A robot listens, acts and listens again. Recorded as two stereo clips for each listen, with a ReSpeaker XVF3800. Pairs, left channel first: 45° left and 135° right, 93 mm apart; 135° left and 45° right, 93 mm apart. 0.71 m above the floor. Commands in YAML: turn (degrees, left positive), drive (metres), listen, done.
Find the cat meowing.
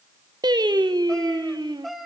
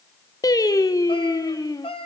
turn: 140
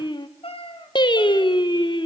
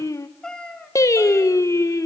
turn: 55
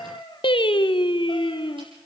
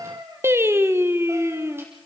turn: 10
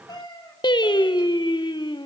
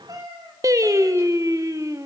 done: "Facing the cat meowing, 2 to 4 m away."